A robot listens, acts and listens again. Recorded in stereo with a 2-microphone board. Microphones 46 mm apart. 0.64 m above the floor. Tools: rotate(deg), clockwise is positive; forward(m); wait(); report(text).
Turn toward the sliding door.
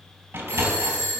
rotate(65)
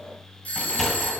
report("Found it: a sliding door, straight ahead, 2 to 4 m away.")